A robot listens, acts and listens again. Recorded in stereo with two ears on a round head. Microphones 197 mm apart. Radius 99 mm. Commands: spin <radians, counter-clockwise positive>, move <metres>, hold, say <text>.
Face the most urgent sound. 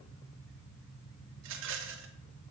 hold
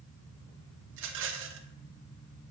hold
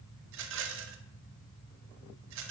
say I can't make out anything urgent, only a rattle.